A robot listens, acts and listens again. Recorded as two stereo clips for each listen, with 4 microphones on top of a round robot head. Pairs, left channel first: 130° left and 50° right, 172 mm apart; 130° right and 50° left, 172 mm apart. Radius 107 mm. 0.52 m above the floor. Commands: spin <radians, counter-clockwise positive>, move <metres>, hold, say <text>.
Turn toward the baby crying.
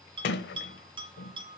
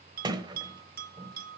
hold
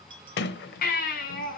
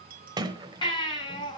spin 2.88
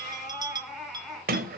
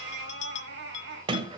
spin 0.70
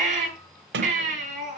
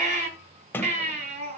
say Found it: a baby crying, straight ahead, over 4 m away.